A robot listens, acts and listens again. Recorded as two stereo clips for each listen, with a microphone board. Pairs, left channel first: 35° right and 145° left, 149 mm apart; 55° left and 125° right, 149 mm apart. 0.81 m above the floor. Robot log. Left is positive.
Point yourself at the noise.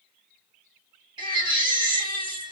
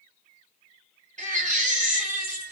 note: The baby crying: 155° right.
cmd yaw -155
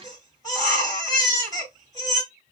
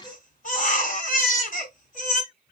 note: The baby crying is now 30° left.
cmd yaw +30
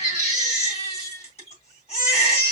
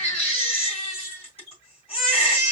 note: The baby crying is now 10° left.
cmd yaw +10
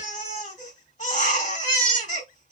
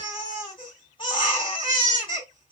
end: Facing the baby crying, 2 to 4 m away.